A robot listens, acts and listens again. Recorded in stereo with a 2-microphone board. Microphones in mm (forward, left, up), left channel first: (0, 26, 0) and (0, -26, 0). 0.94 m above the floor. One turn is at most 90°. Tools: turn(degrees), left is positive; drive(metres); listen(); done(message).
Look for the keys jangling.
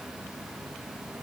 listen()
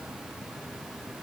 listen()
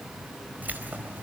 turn(degrees=-35)
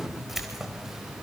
turn(degrees=-10)
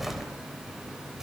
turn(degrees=-10)
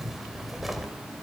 done("Found it: keys jangling, straight ahead, 2 to 4 m away.")